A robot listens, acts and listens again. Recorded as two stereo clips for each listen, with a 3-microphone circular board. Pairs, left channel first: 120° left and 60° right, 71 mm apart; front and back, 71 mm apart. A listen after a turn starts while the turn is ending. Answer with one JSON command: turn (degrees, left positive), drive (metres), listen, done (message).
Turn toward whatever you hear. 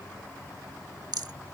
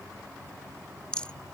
{"turn": -75}
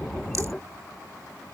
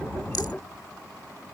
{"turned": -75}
{"listen": true}
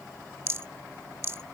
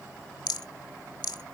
{"turn": -10}
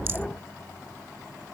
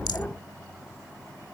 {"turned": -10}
{"listen": true}
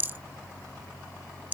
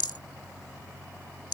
{"done": "Found it: a rattle, straight ahead."}